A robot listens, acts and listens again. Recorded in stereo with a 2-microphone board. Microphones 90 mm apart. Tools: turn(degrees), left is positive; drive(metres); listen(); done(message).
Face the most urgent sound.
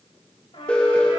turn(degrees=30)
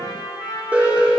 turn(degrees=-20)
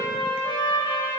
listen()
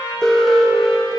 done("Found it: an alarm, straight ahead.")